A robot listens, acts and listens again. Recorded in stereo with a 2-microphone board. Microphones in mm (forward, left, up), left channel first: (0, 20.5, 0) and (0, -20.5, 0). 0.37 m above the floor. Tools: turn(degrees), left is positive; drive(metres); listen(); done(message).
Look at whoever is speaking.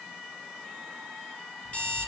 listen()
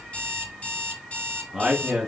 turn(degrees=-30)
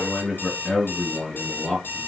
turn(degrees=20)
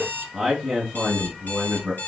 done("Facing the man speaking.")